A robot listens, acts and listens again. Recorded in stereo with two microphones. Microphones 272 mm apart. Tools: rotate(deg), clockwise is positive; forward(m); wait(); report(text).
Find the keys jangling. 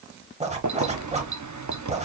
rotate(90)
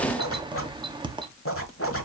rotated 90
rotate(15)
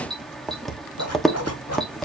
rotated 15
report("Found it: keys jangling, straight ahead.")